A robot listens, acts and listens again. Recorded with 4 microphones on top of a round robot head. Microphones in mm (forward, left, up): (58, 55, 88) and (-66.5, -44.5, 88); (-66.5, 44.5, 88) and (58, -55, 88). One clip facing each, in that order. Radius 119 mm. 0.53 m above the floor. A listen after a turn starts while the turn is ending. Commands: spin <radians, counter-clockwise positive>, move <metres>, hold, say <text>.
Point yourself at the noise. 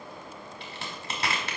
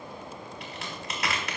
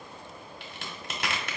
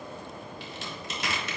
spin 1.75
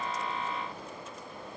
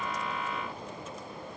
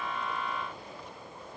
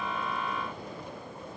say I heard a crack from this way, but can't make it out now.